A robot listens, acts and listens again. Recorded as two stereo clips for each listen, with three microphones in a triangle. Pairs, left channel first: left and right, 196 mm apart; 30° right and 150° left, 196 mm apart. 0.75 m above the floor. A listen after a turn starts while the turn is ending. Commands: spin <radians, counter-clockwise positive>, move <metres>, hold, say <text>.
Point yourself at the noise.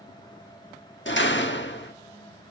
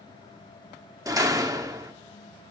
spin 1.40
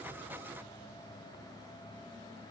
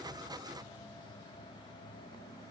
say I heard a door slam from this way, but can't make it out now.